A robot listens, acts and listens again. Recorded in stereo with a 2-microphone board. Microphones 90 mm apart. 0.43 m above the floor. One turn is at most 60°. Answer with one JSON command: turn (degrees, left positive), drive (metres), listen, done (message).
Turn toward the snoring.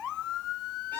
{"listen": true}
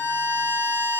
{"listen": true}
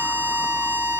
{"done": "I can't make out snoring, only a violin."}